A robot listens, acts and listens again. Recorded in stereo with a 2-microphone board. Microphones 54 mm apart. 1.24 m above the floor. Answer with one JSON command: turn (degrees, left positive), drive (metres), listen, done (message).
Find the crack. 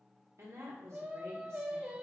{"listen": true}
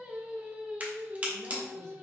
{"turn": -30}
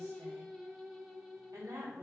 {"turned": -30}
{"listen": true}
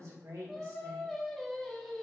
{"done": "I heard a crack, but can't make it out now. It was about straight ahead or 120° right."}